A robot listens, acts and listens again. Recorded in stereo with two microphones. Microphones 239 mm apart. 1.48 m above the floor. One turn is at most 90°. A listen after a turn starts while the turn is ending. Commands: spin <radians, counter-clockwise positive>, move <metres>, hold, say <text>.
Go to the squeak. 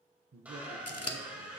spin -0.52
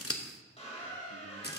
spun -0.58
spin 0.44
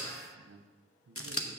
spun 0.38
move 1.0
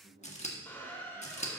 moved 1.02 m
spin 0.17
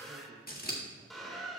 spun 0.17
move 1.0
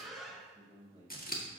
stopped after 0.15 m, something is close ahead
say Arrived at the squeak, straight ahead.